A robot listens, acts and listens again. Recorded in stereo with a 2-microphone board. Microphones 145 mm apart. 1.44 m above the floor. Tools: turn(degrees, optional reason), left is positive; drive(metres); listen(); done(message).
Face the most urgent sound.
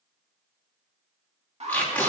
turn(degrees=-45, reason="The alarm: about 45° right or 135° right.")
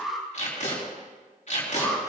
done("Facing the alarm, 1 to 2 m away.")